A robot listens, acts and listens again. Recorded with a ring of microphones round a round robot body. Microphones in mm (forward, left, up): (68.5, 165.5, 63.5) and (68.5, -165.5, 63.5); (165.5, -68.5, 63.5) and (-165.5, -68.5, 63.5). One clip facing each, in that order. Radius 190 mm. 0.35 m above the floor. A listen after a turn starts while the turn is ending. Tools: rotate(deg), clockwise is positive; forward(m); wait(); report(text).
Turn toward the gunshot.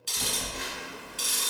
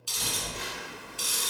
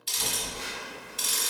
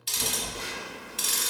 wait()
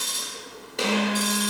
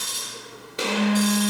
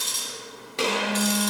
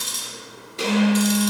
rotate(10)
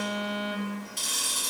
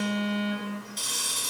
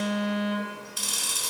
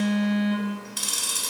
report("Facing where the gunshot came from. I can't hear it now.")